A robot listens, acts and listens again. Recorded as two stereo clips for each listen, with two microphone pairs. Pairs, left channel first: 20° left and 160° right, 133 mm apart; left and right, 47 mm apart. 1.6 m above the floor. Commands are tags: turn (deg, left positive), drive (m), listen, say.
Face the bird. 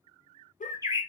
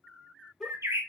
<turn deg="-90"/>
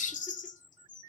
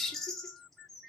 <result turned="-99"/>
<turn deg="10"/>
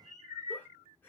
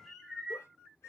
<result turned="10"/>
<say>Found it: a bird, straight ahead, under 1 m away.</say>